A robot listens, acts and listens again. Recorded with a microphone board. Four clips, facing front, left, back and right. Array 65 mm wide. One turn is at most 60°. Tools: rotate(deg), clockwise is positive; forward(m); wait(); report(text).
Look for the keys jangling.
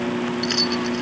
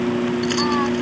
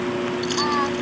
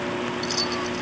rotate(-55)
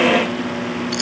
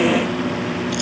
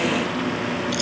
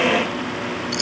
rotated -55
rotate(25)
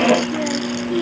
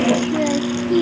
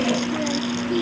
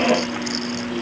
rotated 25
wait()
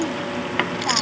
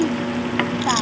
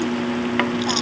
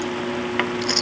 rotate(15)
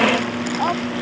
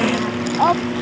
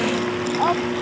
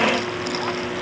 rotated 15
wait()
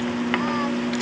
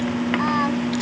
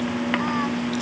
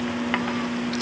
wait()
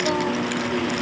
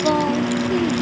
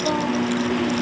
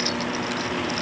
report("I heard keys jangling from this way, but can't make it out now.")